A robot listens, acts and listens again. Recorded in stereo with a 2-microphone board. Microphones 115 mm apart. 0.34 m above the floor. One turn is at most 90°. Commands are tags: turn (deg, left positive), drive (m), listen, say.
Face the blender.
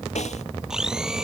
<turn deg="-30"/>
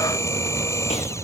<turn deg="25"/>
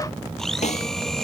<say>Facing the blender.</say>